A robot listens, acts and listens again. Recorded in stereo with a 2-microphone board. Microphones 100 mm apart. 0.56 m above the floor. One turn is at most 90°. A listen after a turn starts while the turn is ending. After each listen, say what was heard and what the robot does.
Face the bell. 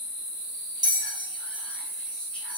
The bell: about 40° right or 140° right. Turn 40° right.
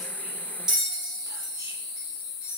Facing the bell.